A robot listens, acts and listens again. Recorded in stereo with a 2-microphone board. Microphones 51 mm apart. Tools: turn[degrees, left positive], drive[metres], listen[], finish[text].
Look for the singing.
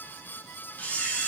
Action: listen[]
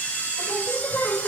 Thought: The singing: about 45° left or 135° left.
Action: turn[45]
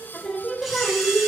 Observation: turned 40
Action: finish[Found it: singing, straight ahead.]